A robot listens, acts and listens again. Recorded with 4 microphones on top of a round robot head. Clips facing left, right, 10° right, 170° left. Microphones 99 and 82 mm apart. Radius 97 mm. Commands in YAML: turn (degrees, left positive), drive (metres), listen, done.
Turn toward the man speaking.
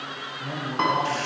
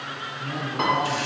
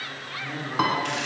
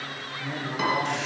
turn: 90
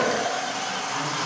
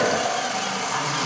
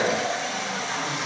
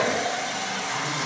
listen: true
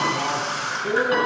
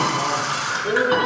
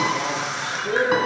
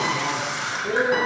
turn: 45
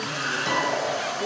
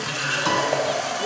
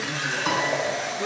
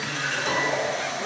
listen: true
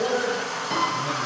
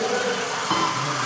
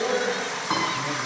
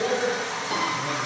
turn: 20
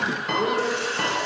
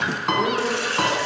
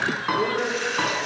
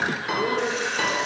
turn: 10
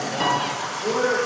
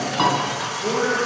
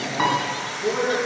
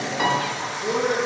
done: "Facing the man speaking, over 4 m away."